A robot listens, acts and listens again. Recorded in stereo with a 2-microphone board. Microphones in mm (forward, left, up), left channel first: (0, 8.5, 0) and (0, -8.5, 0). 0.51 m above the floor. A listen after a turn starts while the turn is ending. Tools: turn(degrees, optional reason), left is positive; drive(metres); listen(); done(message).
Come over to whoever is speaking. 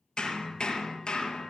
listen()
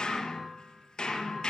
listen()
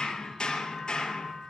done("I can't make out anyone speaking, only hammering.")